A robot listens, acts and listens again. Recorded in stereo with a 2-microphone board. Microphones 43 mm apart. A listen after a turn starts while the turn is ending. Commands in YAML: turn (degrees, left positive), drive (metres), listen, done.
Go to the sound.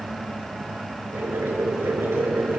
turn: -90
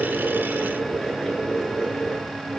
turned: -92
turn: 10
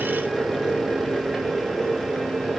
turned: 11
drive: 1.0
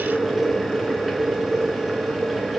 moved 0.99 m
drive: 1.0
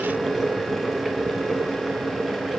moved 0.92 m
drive: 1.0
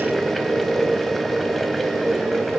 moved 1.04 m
drive: 1.0
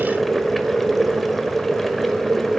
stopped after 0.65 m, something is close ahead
done: "Arrived at the boiling, straight ahead."